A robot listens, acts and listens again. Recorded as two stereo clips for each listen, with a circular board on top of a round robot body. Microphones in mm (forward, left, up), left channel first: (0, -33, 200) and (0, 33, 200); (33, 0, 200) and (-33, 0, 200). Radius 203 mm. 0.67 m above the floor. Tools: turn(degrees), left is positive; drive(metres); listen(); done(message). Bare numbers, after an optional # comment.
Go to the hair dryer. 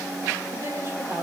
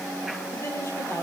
listen()
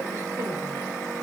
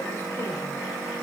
listen()
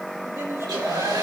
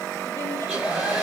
# The hair dryer: 95° left.
turn(95)
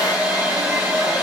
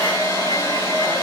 drive(1.0)
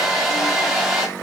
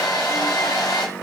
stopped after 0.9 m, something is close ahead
done("Something is in my way. I am facing the hair dryer but have not reached it.")